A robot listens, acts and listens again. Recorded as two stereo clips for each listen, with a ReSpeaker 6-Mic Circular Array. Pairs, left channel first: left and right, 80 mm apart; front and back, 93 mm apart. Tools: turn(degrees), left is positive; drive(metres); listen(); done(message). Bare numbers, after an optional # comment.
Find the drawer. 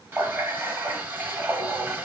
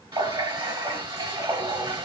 listen()
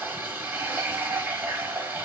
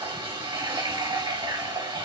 listen()
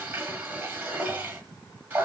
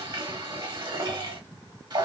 done("I can't make out a drawer to turn to.")